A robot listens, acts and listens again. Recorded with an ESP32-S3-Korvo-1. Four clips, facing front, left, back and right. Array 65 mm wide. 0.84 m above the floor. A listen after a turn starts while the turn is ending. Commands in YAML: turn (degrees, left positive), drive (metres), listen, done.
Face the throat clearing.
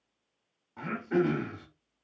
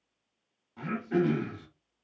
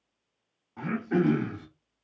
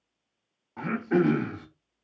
turn: -90
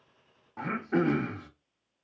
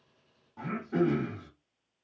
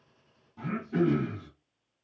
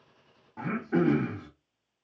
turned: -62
turn: -30
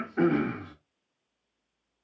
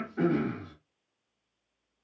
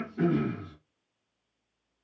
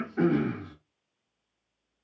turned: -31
done: "Facing the throat clearing, under 1 m away."